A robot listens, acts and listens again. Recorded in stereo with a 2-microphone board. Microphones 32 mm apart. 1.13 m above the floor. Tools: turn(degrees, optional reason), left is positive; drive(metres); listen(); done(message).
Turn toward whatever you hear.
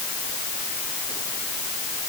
listen()
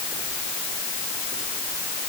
listen()
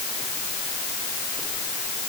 done("I can't make out anything.")